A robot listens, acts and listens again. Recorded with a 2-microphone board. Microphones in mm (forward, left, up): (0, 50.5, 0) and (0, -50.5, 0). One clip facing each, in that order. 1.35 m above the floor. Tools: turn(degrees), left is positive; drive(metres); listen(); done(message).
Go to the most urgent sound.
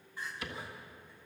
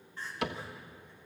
turn(degrees=30)
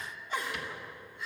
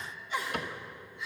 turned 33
turn(degrees=135)
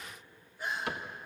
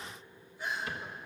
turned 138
drive(metres=1.0)
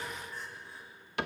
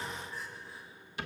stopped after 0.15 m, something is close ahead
done("Blocked. The crying is further on, straight ahead.")